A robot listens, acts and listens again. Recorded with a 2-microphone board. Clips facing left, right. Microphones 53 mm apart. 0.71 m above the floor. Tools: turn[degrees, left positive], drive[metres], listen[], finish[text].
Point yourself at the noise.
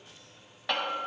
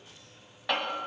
Action: turn[30]
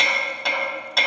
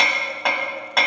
Thought: So it is at 30° right.
Action: turn[-30]
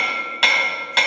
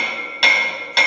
Action: finish[Found it: hammering, straight ahead, 2 to 4 m away.]